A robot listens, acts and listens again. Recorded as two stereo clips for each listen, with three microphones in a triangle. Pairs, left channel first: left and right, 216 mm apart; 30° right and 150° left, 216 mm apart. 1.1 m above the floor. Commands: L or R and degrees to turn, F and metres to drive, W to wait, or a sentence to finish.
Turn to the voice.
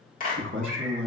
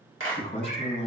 R90
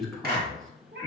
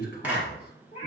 Facing the man speaking.